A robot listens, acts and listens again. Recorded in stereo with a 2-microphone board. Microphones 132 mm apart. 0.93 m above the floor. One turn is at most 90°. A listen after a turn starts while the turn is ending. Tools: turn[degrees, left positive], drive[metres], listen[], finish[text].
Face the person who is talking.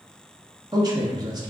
Thought: The man speaking: about 30° right or 150° right.
Action: turn[-30]
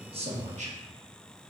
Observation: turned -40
Thought: So it is at 110° right.
Action: turn[-90]
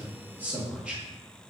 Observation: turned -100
Thought: The man speaking is now 10° right.
Action: turn[-10]
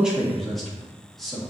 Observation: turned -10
Action: finish[Facing the man speaking, 1 to 2 m away.]